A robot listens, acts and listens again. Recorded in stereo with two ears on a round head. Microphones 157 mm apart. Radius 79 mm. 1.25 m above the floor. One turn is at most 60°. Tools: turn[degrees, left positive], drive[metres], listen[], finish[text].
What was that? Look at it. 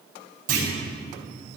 Thought: The clunk: about 50° right or 130° right.
Action: turn[-50]
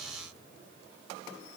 Action: listen[]
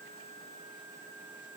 Action: finish[I heard a clunk, but can't make it out now. It was about straight ahead or 80° right.]